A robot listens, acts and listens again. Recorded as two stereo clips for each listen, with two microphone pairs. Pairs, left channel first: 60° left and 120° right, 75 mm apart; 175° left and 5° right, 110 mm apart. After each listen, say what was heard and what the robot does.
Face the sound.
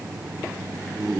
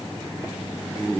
Keep listening.
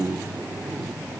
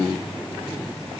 Keep listening.
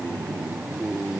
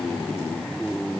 I can't make out anything.